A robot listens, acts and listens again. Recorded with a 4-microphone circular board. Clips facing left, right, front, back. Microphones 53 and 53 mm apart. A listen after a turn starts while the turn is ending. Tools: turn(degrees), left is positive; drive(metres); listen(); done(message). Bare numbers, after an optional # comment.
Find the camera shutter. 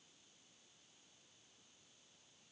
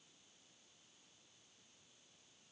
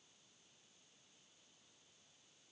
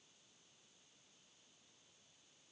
listen()
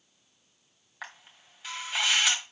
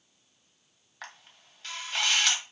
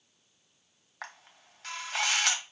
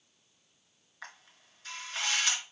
# The camera shutter: 10° left.
turn(10)
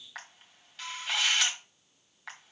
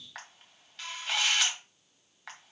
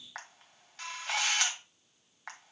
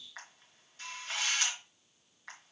done("Facing the camera shutter, 1 to 2 m away.")